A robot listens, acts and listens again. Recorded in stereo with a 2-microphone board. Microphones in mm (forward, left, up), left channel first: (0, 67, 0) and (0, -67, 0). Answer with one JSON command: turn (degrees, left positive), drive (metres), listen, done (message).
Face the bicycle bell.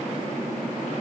{"listen": true}
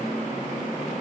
{"listen": true}
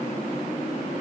{"done": "I can't make out a bicycle bell to turn to."}